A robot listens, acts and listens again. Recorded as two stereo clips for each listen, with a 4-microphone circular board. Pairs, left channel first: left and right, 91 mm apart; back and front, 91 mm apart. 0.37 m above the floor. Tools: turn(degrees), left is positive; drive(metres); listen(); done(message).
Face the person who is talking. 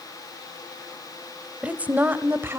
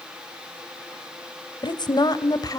turn(degrees=-145)
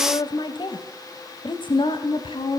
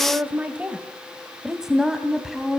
turn(degrees=90)
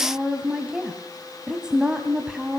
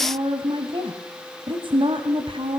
turn(degrees=-10)
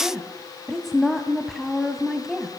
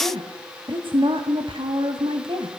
done("Found it: a woman speaking, straight ahead.")